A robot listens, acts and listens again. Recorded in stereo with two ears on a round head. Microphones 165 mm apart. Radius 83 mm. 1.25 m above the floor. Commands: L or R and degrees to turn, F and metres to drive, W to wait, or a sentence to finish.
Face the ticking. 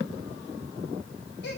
W
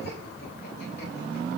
W
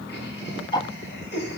L25
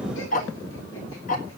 L130
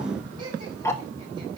L15
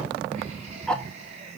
Facing the ticking.